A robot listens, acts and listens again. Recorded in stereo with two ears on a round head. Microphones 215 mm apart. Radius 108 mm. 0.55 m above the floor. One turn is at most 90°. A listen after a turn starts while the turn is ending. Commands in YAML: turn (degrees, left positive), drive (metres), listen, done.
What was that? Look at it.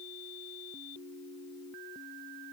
listen: true
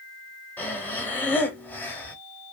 turn: 30
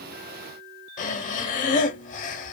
turn: 90
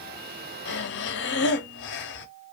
turn: 55
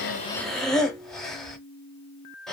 done: "Found it: breathing, straight ahead."